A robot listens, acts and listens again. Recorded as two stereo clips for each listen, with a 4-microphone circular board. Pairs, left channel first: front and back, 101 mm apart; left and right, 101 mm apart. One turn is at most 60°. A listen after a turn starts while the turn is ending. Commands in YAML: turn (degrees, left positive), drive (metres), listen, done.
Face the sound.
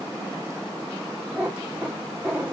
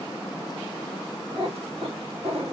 turn: -60
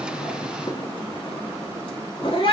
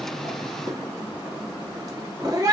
turn: -35
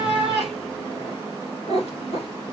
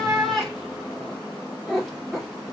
done: "Found it: a cat meowing, straight ahead."